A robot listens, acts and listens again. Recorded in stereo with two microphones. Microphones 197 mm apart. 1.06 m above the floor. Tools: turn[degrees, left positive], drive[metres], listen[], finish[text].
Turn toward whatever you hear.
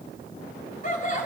Thought: The laughter: about 40° left or 140° left.
Action: turn[40]
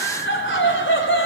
Thought: So it is at 100° left.
Action: turn[100]
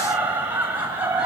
Thought: The laughter is now 10° right.
Action: turn[-10]
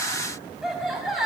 Action: finish[Found it: laughter, straight ahead, over 4 m away.]